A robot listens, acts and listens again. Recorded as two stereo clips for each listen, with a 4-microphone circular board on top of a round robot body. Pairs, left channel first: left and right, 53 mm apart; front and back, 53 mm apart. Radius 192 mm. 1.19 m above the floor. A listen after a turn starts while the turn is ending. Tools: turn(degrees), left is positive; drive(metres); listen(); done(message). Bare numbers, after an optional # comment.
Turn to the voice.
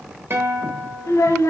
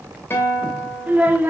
# The child speaking: 125° left.
turn(125)
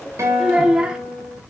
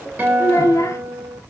# The child speaking is now 15° right.
turn(-15)
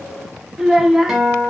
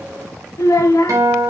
done("Found it: a child speaking, straight ahead, 1 to 2 m away.")